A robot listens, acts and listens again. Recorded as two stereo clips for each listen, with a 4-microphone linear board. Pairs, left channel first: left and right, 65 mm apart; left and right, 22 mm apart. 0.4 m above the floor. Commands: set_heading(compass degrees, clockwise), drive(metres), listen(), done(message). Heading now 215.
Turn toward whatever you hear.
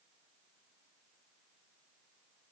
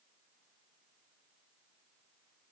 listen()
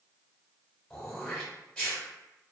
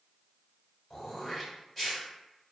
set_heading(200)
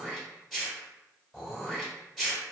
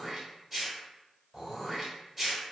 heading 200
done("Found it: throat clearing, straight ahead, 1 to 2 m away.")